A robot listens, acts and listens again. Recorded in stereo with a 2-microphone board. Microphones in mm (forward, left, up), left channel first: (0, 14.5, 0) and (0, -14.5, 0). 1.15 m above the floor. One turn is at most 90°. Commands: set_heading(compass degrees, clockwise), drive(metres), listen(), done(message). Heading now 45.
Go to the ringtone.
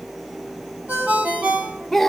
set_heading(135)
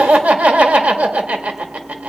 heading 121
set_heading(136)
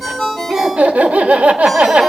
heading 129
set_heading(144)
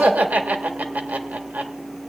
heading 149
listen()
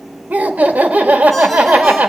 listen()
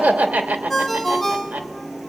drive(1.0)
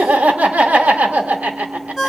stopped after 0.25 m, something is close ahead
done("Blocked. The ringtone is further on, straight ahead.")